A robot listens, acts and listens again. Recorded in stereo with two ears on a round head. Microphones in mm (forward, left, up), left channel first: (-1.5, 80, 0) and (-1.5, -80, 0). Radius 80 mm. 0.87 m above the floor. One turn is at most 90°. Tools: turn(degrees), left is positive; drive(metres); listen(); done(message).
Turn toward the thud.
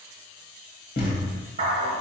turn(degrees=60)
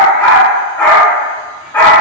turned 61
listen()
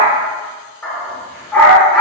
done("I heard a thud, but can't make it out now. It was about 5° right or 60° left.")